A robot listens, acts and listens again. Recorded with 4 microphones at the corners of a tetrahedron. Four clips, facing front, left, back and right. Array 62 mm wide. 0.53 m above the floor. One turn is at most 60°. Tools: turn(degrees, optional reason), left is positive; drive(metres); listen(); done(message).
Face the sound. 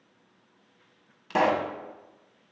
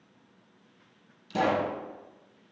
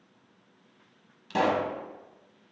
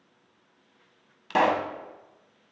turn(degrees=-60, reason="The pop: 70° right.")
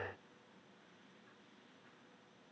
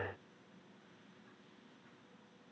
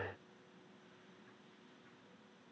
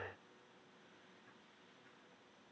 turn(degrees=-10, reason="Nothing new. It was at 10° right.")
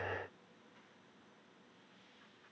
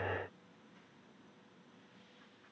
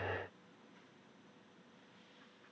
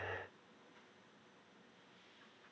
done("I heard a pop from this way, but can't make it out now.")